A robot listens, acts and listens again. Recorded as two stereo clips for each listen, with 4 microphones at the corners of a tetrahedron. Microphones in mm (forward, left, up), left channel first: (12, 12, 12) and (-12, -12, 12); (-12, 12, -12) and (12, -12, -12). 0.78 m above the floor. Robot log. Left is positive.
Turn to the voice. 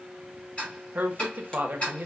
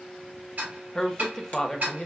note: The woman speaking: 155° right.
cmd yaw -155
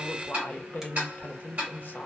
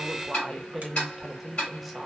note: The woman speaking is now 40° left.
cmd yaw +40
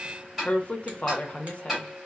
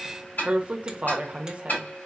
end: Facing the woman speaking, under 1 m away.